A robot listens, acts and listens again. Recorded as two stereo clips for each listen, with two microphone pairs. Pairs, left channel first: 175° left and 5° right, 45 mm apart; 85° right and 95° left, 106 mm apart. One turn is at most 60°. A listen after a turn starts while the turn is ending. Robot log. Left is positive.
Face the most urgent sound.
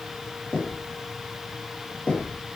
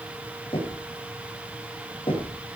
cmd idle
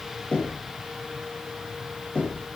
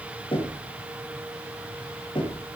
cmd idle
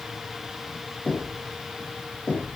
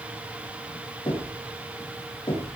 end: I can't make out anything urgent to turn to.